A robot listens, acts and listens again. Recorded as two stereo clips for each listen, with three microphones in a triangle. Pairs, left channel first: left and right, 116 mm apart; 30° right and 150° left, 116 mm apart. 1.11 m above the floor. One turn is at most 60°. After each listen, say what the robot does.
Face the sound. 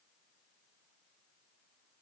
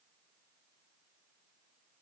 Keep listening.
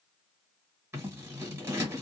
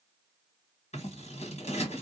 Turn 20° right.
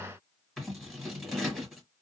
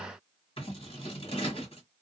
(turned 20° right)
Found it: scissors, straight ahead, 1 to 2 m away.